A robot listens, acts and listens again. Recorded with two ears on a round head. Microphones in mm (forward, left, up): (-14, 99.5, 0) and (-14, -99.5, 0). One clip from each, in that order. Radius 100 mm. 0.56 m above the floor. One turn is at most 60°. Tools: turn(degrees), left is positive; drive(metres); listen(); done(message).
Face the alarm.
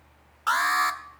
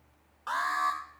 turn(degrees=60)
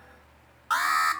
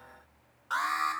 turn(degrees=35)
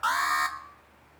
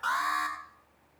turn(degrees=25)
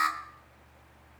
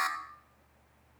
done("Found it: an alarm, straight ahead, 1 to 2 m away.")